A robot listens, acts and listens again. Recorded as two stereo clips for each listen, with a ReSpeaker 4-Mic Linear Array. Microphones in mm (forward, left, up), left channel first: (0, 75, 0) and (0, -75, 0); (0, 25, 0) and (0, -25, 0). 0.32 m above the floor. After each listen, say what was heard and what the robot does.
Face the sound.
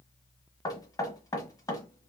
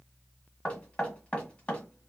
The knocking: about 25° left or 155° left. Turn 25° left.
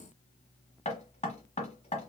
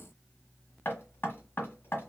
So it is at 125° left. Turn 125° left.
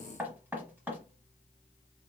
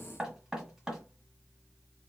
The knocking is now 15° right. Turn 15° right.
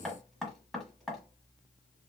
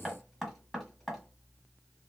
Facing the knocking, 1 to 2 m away.